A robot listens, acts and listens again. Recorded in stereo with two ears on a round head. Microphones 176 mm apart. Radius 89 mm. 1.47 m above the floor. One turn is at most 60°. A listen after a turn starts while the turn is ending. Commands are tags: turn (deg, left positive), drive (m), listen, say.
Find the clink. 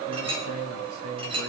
<turn deg="-25"/>
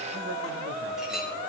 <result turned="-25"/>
<listen/>
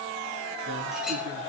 <listen/>
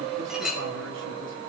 <say>Facing the clink, over 4 m away.</say>